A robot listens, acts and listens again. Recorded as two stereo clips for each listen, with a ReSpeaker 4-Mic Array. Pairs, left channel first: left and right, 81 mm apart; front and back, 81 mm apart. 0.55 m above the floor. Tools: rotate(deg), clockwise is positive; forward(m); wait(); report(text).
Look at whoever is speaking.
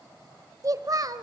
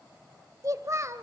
rotate(125)
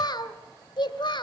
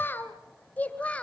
rotate(-75)
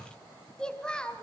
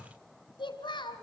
rotate(-10)
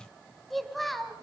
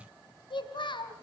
report("Found it: a child speaking, straight ahead.")